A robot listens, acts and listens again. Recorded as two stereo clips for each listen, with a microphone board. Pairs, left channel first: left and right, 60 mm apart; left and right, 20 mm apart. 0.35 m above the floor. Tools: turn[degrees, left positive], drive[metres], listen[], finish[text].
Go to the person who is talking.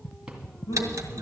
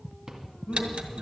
Action: turn[90]
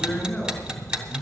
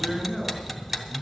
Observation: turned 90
Thought: So it is at 10° left.
Action: turn[10]
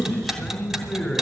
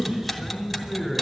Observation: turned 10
Action: drive[1.0]
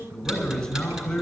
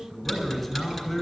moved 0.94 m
Thought: The man speaking is now 10° left.
Action: turn[10]
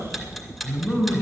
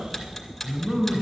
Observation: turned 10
Action: drive[1.0]
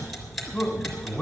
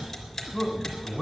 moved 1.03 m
Action: drive[1.0]
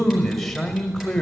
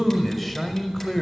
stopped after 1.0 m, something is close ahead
Action: finish[I am next to the man speaking.]